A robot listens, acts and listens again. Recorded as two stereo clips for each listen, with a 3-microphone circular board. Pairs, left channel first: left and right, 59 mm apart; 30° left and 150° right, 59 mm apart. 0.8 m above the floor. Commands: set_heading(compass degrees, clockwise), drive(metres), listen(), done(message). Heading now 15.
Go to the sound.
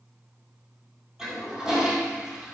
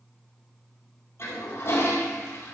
set_heading(25)
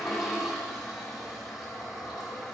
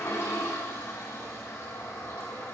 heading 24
drive(1.0)
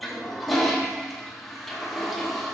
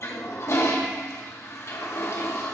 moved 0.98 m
drive(1.0)
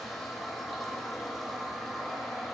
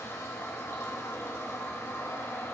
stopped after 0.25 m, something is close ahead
done("Arrived at the toilet flushing, straight ahead.")